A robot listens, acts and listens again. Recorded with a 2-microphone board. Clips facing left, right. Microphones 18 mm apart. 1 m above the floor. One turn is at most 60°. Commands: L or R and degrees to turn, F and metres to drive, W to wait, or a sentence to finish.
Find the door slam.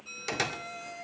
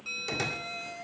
L30
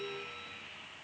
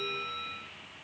W
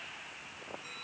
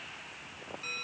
I heard a door slam, but can't make it out now. It was about straight ahead or 120° left.